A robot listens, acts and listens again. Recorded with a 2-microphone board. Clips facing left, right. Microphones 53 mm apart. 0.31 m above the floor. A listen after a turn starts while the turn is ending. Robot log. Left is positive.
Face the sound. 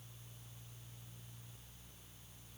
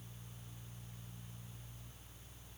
cmd idle
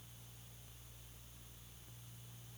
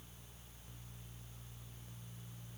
cmd idle
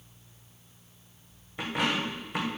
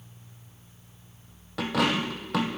cmd yaw -90
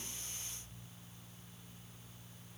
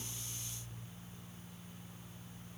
end: I heard a dropped coin from this way, but can't make it out now.